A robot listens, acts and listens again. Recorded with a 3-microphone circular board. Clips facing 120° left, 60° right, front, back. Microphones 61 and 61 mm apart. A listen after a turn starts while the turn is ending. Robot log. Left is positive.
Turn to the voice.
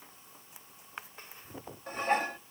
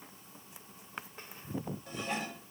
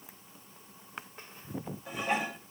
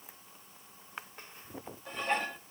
cmd idle
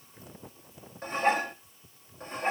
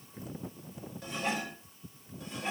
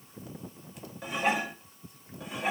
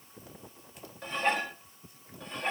cmd idle
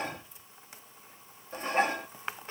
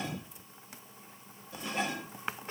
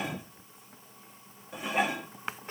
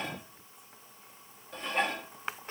end: I can't make out anyone speaking to turn to.